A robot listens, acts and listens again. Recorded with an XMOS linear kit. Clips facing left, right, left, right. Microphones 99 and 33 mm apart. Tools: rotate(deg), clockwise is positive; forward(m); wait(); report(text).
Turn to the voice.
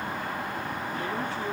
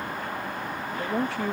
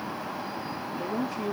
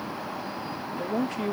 rotate(90)
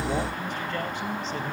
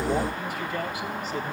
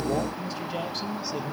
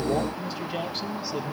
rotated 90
report("Facing the man speaking, 2 to 4 m away.")